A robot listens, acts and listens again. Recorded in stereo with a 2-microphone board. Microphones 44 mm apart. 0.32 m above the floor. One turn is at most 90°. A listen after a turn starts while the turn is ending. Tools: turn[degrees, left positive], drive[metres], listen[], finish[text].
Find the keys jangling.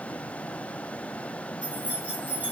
Thought: The keys jangling: about 35° right or 145° right.
Action: turn[-35]
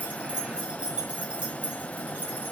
Thought: The keys jangling: about 35° right or 145° right.
Action: turn[-35]
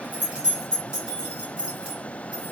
Thought: So it is at 20° right.
Action: turn[-20]
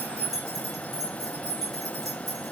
Thought: The keys jangling is now 10° right.
Action: turn[-10]
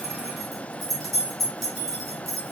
Action: finish[Found it: keys jangling, straight ahead, 2 to 4 m away.]